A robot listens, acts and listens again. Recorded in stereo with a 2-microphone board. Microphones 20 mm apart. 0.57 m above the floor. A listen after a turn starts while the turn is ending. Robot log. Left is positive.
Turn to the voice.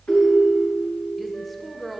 cmd yaw +30
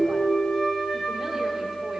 cmd idle
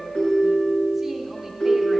cmd idle
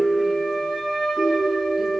end: I heard a woman speaking, but can't make it out now. It was about 30° right or 150° left.